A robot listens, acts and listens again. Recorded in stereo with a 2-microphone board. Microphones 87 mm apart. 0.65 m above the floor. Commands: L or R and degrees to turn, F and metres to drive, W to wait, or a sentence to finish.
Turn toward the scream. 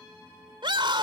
R70
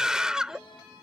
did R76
Facing the scream.